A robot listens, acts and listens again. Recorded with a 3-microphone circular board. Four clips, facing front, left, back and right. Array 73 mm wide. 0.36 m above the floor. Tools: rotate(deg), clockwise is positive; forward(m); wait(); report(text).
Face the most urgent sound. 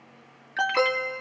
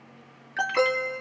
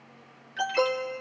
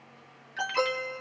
rotate(-35)
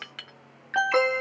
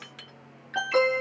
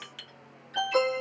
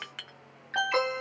report("Found it: an alarm, straight ahead.")